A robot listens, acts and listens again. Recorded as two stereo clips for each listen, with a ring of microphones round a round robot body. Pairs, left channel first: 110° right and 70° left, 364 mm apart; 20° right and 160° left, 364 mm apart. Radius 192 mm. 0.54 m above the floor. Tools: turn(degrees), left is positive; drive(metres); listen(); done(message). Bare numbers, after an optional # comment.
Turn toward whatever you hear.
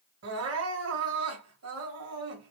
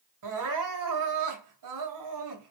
# The crying: 120° left.
turn(120)
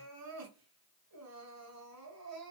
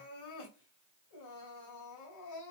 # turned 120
# The crying is now 20° left.
turn(20)
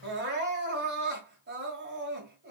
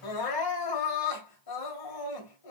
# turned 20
done("Facing the crying.")